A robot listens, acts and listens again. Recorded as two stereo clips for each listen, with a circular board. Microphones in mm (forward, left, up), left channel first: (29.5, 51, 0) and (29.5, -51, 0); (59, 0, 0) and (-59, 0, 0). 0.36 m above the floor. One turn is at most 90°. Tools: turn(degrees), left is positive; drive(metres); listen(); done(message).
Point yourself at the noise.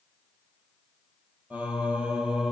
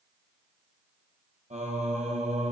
turn(degrees=-90)
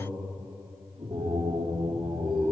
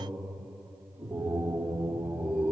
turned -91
turn(degrees=-90)
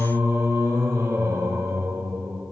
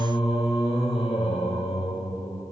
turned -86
turn(degrees=-30)
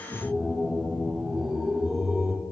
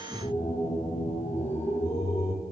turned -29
done("Found it: singing, straight ahead.")